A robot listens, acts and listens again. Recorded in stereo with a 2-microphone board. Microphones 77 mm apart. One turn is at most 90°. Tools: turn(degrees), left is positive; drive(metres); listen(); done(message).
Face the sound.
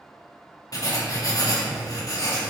turn(degrees=50)
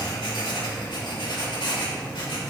turn(degrees=75)
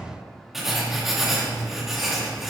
done("Found it: writing, straight ahead, 2 to 4 m away.")